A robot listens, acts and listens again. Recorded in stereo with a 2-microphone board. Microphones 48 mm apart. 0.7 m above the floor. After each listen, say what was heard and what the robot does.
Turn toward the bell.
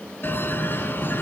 The bell: about 40° left or 140° left. Turn 40° left.
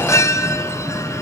So it is at 100° left. Turn 100° left.
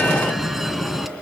Facing the bell.